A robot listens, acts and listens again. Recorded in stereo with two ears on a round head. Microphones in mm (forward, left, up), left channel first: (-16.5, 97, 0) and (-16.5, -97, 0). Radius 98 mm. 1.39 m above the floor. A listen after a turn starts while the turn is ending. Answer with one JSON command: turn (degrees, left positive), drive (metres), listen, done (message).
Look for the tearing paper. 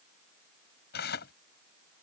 {"turn": 45}
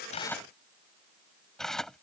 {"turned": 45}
{"done": "Found it: tearing paper, straight ahead."}